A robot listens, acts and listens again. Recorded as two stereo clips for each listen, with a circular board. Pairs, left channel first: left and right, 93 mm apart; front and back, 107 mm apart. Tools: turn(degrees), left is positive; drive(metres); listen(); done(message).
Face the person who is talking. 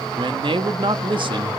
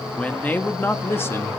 turn(degrees=-65)
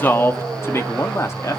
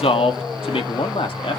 turn(degrees=35)
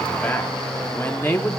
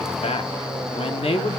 turn(degrees=25)
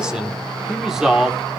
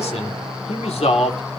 done("Facing the man speaking.")